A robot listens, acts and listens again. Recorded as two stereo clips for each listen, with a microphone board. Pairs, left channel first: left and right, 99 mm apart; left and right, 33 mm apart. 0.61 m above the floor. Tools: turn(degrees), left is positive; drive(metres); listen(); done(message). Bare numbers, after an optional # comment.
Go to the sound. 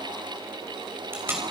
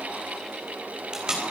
# The tape being pulled: about 20° right or 160° right.
turn(-20)
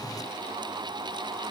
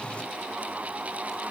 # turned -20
listen()
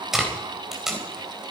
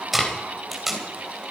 drive(1.0)
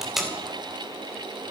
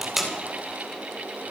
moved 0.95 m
drive(1.0)
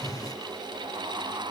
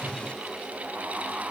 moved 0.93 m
listen()
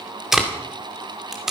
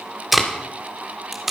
drive(1.0)
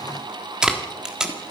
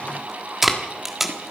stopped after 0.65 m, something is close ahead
# The tape being pulled is now 10° right.
turn(-10)
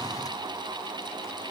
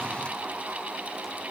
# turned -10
listen()
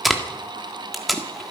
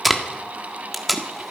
done("I am next to the tape being pulled.")